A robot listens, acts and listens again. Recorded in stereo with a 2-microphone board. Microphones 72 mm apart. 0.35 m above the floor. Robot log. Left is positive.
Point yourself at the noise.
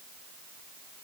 cmd idle
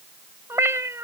note: The cat meowing: about 40° right or 140° right.
cmd yaw -40
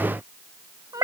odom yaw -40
note: So it is at 95° right.
cmd yaw -95
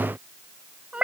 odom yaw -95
note: The cat meowing is now 20° right.
cmd yaw -20
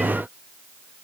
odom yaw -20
cmd idle
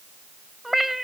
end: Found it: a cat meowing, straight ahead.